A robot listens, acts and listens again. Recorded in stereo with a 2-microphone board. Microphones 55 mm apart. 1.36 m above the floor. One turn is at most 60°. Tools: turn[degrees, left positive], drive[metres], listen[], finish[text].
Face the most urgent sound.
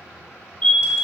Thought: The fire alarm: about 20° left or 160° left.
Action: turn[20]
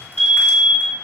Action: finish[Found it: a fire alarm, straight ahead, 1 to 2 m away.]